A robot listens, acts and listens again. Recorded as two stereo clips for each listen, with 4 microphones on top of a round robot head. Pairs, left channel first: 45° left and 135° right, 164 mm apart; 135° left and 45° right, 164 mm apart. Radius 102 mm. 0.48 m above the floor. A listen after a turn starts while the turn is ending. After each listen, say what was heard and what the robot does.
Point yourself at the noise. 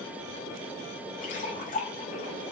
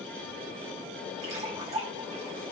Facing the splash.